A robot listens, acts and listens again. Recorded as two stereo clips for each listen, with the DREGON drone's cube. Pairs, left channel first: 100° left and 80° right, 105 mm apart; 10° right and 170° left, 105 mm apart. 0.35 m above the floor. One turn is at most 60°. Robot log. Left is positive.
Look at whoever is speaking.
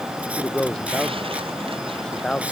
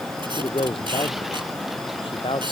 note: The man speaking: 20° left.
cmd yaw +20
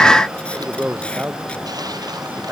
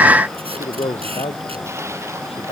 end: Facing the man speaking.